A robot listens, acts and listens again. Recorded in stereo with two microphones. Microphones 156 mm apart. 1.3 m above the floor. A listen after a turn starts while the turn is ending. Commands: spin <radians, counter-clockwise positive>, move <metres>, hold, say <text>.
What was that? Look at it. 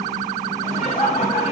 spin 0.79
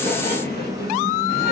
spin 1.83
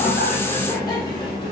hold
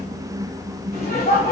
spin 0.87
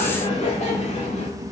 spin 0.61
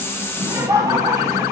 spin -0.44
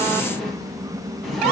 hold
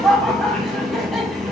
say Facing the laughter, 1 to 2 m away.